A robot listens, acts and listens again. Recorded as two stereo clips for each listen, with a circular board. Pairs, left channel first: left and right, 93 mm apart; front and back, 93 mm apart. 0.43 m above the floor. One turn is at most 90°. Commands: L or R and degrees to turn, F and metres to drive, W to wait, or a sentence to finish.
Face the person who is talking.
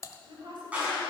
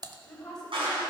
R80
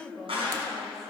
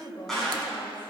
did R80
Found it: a woman speaking, straight ahead, 2 to 4 m away.